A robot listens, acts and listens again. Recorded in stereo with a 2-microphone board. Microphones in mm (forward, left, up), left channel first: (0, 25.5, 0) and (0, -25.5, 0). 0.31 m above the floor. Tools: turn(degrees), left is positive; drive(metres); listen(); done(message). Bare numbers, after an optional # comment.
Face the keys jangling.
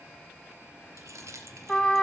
turn(-90)
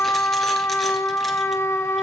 listen()
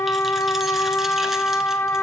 listen()
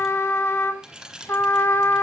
# The keys jangling is now 15° right.
turn(-15)
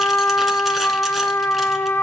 listen()
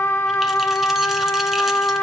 listen()
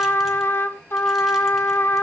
done("I heard keys jangling from this way, but can't make it out now.")